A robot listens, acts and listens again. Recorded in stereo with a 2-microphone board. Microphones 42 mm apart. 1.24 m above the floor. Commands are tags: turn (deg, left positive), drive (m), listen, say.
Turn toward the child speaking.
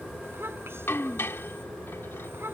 <turn deg="-70"/>
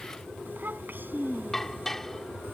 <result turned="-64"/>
<turn deg="-55"/>
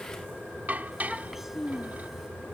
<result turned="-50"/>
<say>Found it: a child speaking, straight ahead.</say>